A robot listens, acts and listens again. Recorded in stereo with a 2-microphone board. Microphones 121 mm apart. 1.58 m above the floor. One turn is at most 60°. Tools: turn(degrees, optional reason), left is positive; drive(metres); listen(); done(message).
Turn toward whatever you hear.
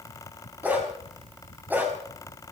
turn(degrees=-15, reason="The dog barking: about 15° right or 165° right.")
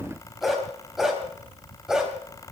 turn(degrees=-30)
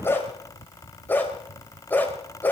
turn(degrees=15, reason="So it is at 15° left.")
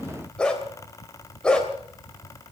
done("Found it: a dog barking, straight ahead, 2 to 4 m away.")